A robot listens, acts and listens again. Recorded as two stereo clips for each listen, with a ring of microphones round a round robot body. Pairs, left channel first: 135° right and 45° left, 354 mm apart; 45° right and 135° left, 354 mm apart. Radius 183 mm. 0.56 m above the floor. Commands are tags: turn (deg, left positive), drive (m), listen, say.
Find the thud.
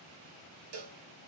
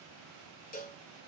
<listen/>
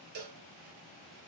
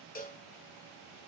<listen/>
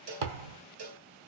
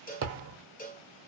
<turn deg="70"/>
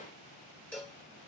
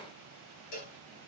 <say>I heard a thud from this way, but can't make it out now.</say>